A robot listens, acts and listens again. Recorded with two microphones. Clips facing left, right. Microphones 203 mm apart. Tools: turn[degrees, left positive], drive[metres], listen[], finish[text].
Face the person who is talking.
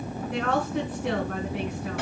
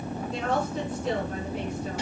Thought: The woman speaking: about 70° left or 110° left.
Action: turn[70]
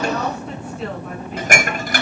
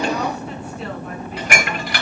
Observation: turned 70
Action: listen[]
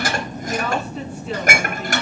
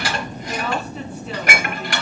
Action: finish[Facing the woman speaking, over 4 m away.]